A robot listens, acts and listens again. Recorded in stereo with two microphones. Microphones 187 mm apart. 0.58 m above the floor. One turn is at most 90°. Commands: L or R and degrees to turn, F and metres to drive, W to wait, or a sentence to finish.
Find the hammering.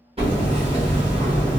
R30
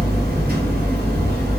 R90
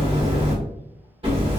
R30
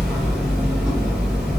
Facing the hammering.